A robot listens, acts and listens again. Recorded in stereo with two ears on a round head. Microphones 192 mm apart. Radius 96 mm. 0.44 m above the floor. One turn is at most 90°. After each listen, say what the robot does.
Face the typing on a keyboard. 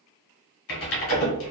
Turn 65° left.
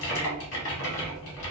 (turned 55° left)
Turn 60° left.
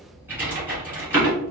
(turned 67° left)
Turn 10° right.
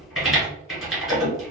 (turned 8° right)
Found it: typing on a keyboard, straight ahead, 1 to 2 m away.